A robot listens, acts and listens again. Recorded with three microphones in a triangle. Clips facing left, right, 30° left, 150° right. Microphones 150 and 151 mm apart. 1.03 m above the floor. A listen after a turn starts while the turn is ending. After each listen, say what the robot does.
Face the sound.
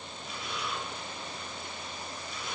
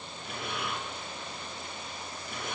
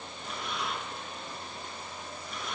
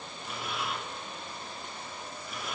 Turn 65° right.
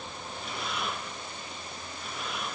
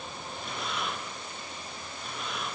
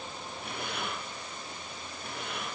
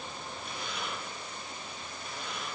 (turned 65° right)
Found it: breathing, straight ahead, under 1 m away.